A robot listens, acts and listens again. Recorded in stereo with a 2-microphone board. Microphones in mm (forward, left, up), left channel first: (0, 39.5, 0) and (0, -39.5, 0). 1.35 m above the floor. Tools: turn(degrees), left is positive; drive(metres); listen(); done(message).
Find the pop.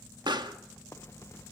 turn(degrees=-90)
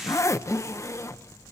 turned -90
done("Facing where the pop came from. I can't hear it now.")